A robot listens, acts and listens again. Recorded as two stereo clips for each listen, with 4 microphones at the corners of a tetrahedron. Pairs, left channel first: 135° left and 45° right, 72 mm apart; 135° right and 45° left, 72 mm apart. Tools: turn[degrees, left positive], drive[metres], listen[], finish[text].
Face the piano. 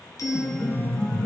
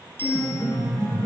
Thought: The piano: 145° right.
Action: turn[-145]
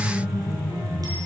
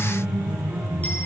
Thought: The piano is now 20° right.
Action: turn[-20]
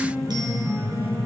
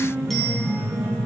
Action: finish[Facing the piano, over 4 m away.]